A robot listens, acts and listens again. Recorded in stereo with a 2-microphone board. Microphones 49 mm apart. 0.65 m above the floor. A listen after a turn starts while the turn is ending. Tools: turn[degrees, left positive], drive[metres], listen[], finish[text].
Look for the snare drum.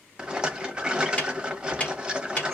Thought: The snare drum: about 25° left or 155° left.
Action: turn[25]
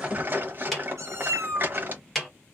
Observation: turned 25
Action: finish[Facing the snare drum, 1 to 2 m away.]